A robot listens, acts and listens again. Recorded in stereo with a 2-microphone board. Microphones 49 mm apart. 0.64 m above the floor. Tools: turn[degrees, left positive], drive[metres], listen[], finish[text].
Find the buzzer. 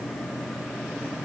Action: listen[]
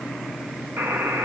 Thought: The buzzer: about 55° right or 125° right.
Action: turn[-55]
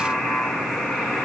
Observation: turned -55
Action: finish[Found it: a buzzer, straight ahead, 2 to 4 m away.]